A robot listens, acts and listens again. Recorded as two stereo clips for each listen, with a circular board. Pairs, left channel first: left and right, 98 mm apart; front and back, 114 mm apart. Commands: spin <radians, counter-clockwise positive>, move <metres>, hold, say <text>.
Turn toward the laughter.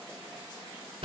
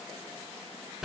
hold
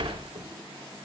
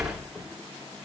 hold
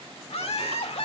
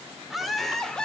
spin 1.48
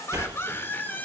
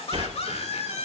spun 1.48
spin 0.35
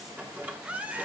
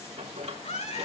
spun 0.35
spin -0.26
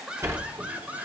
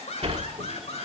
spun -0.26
spin -0.26
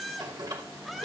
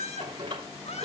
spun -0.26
say Found it: laughter, straight ahead, 2 to 4 m away.